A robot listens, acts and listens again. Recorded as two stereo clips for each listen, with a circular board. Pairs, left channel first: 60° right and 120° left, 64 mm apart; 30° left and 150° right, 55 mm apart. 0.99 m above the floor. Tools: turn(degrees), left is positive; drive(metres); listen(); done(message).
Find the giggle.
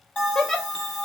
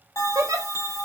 turn(degrees=-145)
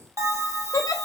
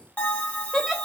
turn(degrees=-60)
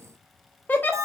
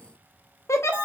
done("Facing the giggle, under 1 m away.")